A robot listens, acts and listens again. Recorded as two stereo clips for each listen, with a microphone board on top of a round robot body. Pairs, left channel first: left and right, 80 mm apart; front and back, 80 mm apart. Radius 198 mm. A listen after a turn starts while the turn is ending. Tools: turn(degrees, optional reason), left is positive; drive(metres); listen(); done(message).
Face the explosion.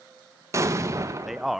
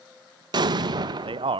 turn(degrees=-145, reason="The explosion: 145° right.")
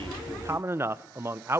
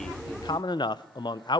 done("I heard an explosion from this way, but can't make it out now.")